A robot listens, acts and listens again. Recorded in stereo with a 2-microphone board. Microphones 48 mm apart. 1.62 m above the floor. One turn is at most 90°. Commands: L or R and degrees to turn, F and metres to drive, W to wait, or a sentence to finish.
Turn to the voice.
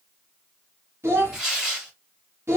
R65
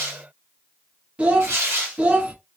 R30
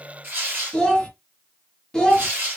L15
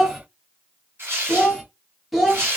Facing the child speaking.